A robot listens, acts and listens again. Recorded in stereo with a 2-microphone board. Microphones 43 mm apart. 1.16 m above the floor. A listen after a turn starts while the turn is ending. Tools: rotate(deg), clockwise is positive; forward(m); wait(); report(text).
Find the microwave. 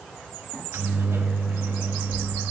rotate(90)
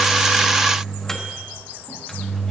rotate(-10)
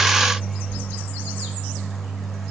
report("Found it: a microwave, straight ahead, 1 to 2 m away.")